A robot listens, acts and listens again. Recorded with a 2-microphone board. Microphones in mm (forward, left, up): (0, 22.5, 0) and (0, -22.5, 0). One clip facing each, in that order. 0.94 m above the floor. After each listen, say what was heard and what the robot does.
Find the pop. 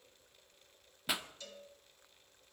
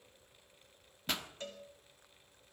Turn 30° left.
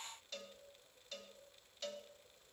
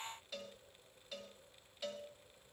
Keep listening.
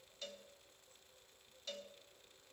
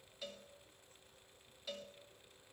I heard a pop, but can't make it out now. It was about 20° right or 140° left.